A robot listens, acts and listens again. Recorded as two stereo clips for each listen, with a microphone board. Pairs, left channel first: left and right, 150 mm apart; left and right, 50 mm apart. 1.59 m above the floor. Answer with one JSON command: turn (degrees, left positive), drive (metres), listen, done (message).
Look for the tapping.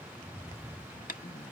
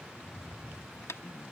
{"turn": 65}
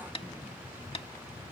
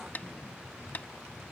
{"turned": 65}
{"turn": 40}
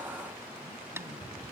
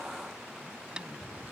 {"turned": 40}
{"turn": -20}
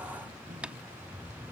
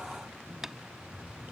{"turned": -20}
{"turn": -10}
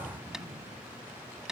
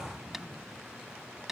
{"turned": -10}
{"done": "Facing the tapping."}